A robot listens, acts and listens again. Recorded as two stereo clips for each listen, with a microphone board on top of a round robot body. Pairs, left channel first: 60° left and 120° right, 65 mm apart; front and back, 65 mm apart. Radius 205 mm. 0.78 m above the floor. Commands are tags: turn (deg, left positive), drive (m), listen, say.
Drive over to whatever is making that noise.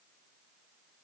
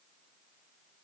<listen/>
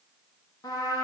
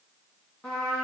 <turn deg="80"/>
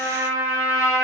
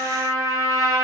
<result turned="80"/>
<turn deg="30"/>
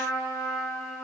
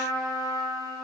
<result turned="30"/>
<drive m="1.0"/>
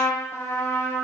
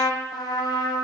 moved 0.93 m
<drive m="1.0"/>
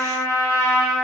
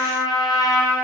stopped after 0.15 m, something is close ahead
<turn deg="10"/>
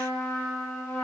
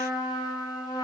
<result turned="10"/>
<say>Arrived at the trumpet, straight ahead.</say>